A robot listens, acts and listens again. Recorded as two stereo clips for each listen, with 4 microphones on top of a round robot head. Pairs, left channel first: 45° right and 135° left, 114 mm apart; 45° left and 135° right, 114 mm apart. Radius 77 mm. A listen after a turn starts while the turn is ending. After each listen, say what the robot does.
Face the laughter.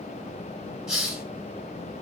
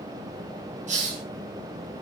Keep listening.
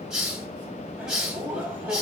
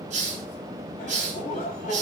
Turn 60° left.
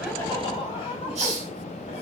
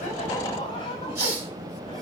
Facing the laughter, over 4 m away.